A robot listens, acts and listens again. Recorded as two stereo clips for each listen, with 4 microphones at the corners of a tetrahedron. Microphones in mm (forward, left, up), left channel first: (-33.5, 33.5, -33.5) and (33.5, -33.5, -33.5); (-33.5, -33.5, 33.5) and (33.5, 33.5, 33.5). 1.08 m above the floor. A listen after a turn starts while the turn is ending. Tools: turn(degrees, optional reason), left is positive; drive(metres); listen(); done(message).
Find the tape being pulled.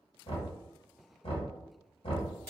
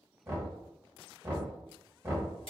listen()
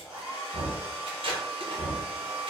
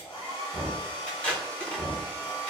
turn(degrees=-60, reason="The tape being pulled: 60° right.")
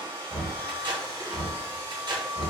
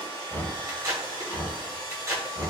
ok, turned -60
turn(degrees=-10, reason="The tape being pulled is now 10° right.")
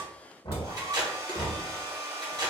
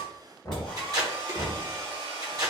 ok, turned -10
done("Found it: tape being pulled, straight ahead.")